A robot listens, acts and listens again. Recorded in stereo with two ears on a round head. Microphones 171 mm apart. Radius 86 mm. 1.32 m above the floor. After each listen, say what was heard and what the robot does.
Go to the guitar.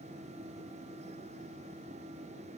Keep listening.
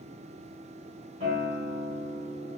The guitar: about 45° right or 135° right. Turn 45° right.
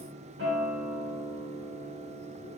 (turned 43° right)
So it is at 90° right. Turn 90° right.
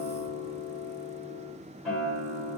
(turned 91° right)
Drive 1.0 m forward.
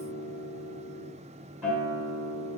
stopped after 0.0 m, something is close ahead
Blocked. The guitar is further on, straight ahead.